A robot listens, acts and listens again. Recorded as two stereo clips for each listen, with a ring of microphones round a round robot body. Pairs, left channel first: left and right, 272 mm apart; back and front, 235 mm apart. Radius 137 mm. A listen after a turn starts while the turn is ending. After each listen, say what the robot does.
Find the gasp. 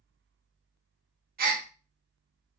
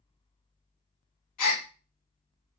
Turn 150° right.
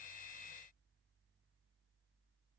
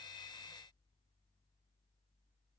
Facing where the gasp came from. I can't hear it now.